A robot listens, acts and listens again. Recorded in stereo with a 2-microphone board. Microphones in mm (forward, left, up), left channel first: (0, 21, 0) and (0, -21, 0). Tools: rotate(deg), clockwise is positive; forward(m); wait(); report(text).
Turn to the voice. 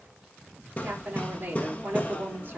rotate(40)
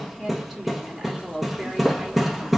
report("Found it: a woman speaking, straight ahead.")